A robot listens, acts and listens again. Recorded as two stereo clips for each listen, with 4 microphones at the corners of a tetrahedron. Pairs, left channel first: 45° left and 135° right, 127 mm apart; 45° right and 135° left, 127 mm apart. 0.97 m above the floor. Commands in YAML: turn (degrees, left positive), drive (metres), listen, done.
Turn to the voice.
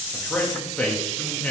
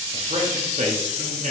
turn: 125
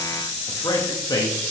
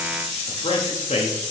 turn: -10
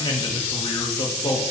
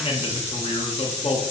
done: "Facing the man speaking, 1 to 2 m away."